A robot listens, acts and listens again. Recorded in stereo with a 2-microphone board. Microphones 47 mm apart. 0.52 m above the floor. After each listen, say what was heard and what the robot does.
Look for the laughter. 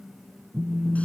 Keep listening.
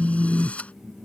Keep listening.
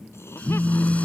The laughter: about 55° left or 125° left. Turn 55° left.
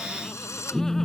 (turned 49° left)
Keep listening.
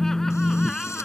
So it is at 10° left. Turn 10° left.
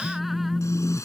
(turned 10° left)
Keep listening.
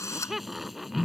Found it: laughter, straight ahead.